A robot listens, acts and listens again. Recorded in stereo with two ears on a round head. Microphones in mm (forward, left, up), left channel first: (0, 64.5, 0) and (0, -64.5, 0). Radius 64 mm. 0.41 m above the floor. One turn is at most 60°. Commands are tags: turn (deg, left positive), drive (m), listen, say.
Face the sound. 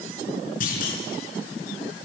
<turn deg="60"/>
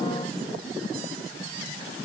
<listen/>
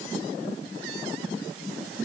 <say>I heard a clunk, but can't make it out now. It was about straight ahead or 60° left.</say>